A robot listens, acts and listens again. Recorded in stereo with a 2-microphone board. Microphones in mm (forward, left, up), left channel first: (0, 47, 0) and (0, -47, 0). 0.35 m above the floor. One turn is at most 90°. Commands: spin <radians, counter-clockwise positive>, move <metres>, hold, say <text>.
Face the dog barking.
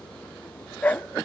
spin 0.26
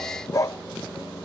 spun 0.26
spin 0.61
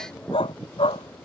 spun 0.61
spin 1.57
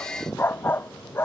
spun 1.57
spin 0.35
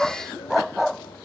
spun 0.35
say Facing the dog barking.